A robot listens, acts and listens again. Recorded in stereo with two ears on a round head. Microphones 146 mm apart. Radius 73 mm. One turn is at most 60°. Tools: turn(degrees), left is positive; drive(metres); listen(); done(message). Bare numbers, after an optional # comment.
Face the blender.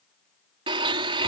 # The blender: about 30° right or 150° right.
turn(-30)
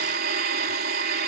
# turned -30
# So it is at 120° right.
turn(-60)
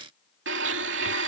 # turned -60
# The blender is now 80° right.
turn(-60)
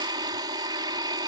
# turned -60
# The blender is now 25° right.
turn(-25)
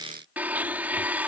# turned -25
# The blender is now 10° right.
turn(-10)
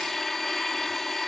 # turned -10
done("Facing the blender.")